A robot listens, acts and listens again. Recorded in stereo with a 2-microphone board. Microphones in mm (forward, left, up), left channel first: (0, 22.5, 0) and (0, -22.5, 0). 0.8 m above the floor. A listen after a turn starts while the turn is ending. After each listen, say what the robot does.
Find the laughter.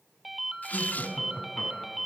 Turn 25° left.
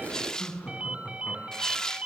Turn 40° left.
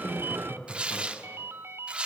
Turn 105° left.
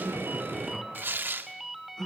Turn 15° left.
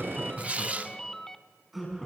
Facing the laughter, over 4 m away.